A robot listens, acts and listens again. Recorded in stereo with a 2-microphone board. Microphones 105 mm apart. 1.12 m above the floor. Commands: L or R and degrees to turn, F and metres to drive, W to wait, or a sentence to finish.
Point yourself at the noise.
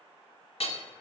L70
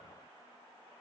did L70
W
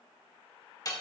L35
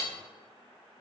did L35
Facing the hammering, 1 to 2 m away.